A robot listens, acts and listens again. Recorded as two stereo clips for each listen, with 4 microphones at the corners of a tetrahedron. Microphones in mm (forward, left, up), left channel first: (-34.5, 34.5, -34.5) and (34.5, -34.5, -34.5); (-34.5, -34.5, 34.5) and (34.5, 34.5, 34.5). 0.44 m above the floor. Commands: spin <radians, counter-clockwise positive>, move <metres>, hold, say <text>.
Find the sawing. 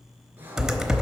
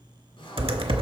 spin -2.01
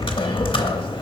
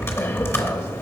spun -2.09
hold
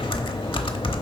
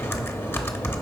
hold
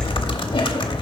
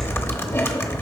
say Facing where the sawing came from. I can't hear it now.